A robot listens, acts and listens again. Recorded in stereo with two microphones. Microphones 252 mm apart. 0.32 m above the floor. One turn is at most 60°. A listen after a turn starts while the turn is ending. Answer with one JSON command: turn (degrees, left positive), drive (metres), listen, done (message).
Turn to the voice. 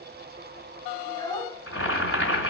{"turn": 15}
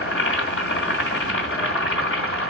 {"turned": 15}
{"listen": true}
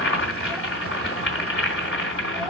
{"done": "Found it: a child speaking, straight ahead, 1 to 2 m away."}